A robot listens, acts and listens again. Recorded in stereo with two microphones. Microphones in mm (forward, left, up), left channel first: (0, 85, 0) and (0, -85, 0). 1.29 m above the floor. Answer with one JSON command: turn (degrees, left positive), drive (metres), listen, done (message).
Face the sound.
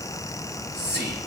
{"turn": -90}
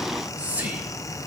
{"turn": -10}
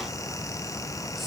{"listen": true}
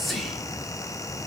{"done": "Found it: whispering, straight ahead, 2 to 4 m away."}